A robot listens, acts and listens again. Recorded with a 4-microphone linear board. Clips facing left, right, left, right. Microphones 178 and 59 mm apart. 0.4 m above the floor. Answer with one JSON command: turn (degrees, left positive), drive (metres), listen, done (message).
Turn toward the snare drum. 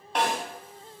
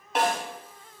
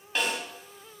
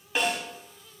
{"turn": -30}
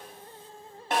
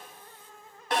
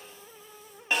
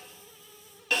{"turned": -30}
{"turn": 25}
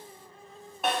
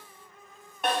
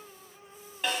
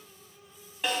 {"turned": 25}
{"done": "Found it: a snare drum, straight ahead, 2 to 4 m away."}